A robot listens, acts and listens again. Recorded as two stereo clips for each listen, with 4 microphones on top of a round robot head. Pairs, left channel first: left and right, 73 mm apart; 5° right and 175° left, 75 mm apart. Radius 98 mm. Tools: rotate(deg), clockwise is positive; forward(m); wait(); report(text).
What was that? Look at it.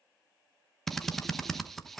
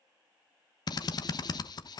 report("Found it: a drill, straight ahead, 1 to 2 m away.")